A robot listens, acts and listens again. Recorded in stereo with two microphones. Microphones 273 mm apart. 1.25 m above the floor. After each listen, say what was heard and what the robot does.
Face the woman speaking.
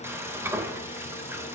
Keep listening.
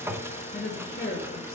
The woman speaking: about 50° left or 130° left. Turn 50° left.
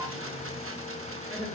So it is at 15° left. Turn 15° left.
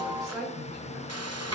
Found it: a woman speaking, straight ahead, 2 to 4 m away.